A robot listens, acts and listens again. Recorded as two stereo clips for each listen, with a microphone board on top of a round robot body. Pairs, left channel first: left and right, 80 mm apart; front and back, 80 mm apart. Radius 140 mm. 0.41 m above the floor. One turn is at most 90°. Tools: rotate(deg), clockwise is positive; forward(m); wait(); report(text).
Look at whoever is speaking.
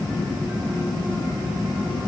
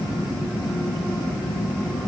wait()
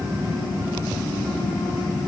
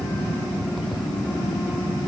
wait()
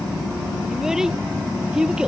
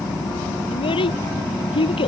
rotate(10)
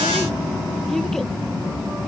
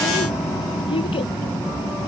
wait()
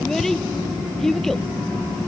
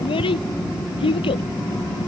report("Found it: a child speaking, straight ahead.")